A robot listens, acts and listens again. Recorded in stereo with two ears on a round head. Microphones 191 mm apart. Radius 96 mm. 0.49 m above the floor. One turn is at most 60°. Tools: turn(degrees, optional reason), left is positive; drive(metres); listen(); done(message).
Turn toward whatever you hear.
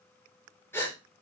turn(degrees=30)
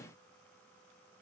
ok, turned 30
listen()
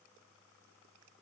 done("I heard a gasp, but can't make it out now. It was about 20° right or 140° left.")